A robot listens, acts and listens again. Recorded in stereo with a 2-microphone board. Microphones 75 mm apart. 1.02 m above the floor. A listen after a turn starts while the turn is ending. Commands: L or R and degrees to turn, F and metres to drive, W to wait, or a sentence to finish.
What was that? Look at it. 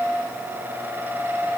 W
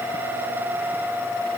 W
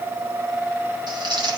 R90
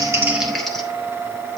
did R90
Found it: crumpling, straight ahead, 2 to 4 m away.